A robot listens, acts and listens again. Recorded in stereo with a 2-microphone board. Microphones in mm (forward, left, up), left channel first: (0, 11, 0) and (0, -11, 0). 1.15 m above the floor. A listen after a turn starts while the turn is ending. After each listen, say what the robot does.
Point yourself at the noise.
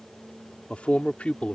Turn 90° left.
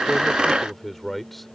Facing the man speaking.